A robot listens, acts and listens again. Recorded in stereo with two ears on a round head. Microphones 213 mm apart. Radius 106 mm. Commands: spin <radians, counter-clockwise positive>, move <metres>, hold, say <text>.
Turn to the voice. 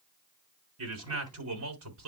spin -1.13
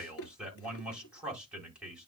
say Found it: a man speaking, straight ahead, over 4 m away.